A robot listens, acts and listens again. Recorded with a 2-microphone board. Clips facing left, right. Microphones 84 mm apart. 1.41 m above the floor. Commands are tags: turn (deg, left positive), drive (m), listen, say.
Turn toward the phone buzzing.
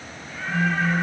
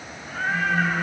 <turn deg="55"/>
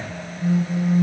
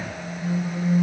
<turn deg="70"/>
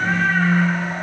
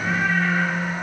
<turn deg="10"/>
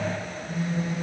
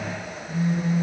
<say>Facing the phone buzzing.</say>